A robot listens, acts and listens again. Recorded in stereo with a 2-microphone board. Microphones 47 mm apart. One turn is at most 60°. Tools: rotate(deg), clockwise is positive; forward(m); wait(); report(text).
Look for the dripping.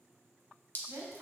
rotate(-40)
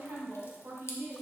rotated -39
wait()
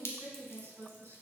rotate(-60)
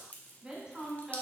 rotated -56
rotate(-40)
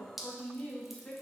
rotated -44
report("Facing the dripping, under 1 m away.")